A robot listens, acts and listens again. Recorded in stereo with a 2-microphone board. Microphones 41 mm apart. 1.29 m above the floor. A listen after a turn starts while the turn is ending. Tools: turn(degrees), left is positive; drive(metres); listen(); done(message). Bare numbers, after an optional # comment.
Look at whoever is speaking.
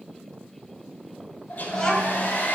turn(30)
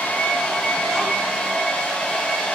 listen()
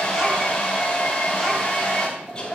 listen()
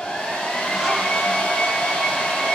done("I heard a child speaking, but can't make it out now. It was about 15° right or 135° left.")